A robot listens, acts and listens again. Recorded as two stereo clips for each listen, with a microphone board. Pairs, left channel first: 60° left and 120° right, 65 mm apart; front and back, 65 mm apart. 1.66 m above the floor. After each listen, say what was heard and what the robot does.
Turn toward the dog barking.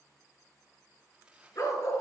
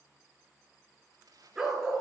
The dog barking: 95° left. Turn 95° left.
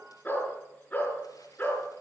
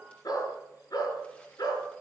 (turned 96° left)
Facing the dog barking, over 4 m away.